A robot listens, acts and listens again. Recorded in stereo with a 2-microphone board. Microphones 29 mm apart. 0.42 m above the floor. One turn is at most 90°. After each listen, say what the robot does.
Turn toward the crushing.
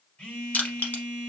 Turn 75° left.
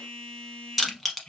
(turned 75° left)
Found it: crushing, straight ahead.